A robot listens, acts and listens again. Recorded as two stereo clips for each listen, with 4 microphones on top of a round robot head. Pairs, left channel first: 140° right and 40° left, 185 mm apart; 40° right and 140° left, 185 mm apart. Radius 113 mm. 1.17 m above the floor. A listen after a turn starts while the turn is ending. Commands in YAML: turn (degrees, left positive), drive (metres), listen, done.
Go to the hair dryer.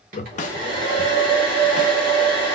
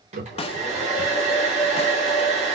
turn: 80
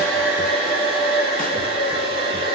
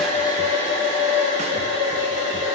drive: 1.0
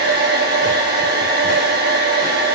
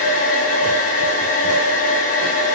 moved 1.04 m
drive: 1.0
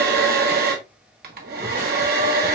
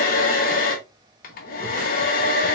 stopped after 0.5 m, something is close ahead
done: "Arrived at the hair dryer, straight ahead."